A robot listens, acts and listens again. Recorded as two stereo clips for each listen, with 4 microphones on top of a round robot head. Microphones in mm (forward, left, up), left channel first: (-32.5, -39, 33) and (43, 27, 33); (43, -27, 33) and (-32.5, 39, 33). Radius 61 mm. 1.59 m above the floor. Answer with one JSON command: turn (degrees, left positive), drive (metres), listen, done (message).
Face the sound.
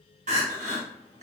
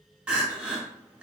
{"turn": 60}
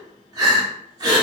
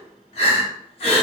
{"turn": -10}
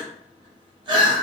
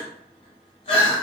{"done": "Found it: crying, straight ahead."}